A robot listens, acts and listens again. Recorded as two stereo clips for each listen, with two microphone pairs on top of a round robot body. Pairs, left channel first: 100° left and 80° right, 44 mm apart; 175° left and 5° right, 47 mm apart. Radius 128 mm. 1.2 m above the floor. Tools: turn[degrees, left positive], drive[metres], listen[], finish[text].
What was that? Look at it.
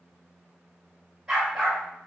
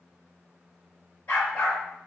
Thought: The dog barking: 160° right.
Action: turn[-160]
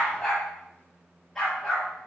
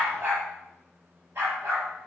Thought: The dog barking is now 20° left.
Action: turn[20]
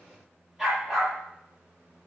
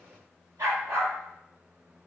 Action: finish[Found it: a dog barking, straight ahead.]